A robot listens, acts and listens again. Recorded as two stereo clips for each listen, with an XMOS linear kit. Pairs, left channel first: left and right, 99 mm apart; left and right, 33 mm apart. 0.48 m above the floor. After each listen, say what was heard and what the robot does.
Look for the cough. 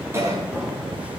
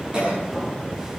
The cough: about 30° right or 150° right. Turn 30° right.
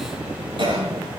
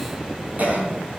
So it is at 120° right. Turn 120° right.
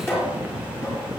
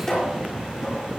Keep listening.
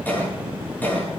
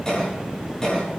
The cough is now 20° left. Turn 20° left.
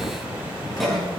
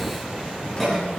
Found it: a cough, straight ahead, over 4 m away.